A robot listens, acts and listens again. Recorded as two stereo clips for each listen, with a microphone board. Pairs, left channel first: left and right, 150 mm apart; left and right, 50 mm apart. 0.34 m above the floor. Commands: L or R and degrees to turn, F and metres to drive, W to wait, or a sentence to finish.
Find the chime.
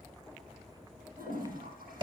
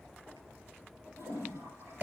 W
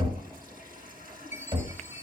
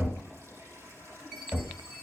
R15
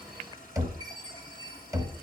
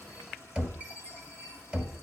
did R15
R150
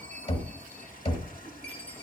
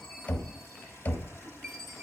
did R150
L10
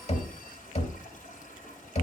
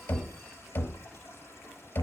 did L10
W
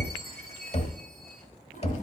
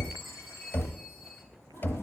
Found it: a chime, straight ahead.